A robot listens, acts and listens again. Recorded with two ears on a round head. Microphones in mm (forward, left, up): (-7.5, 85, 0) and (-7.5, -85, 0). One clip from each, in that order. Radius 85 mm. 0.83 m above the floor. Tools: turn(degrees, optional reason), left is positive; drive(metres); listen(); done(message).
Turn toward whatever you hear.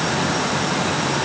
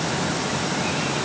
listen()
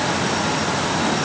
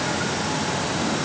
listen()
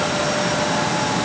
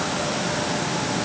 done("I can't make out anything.")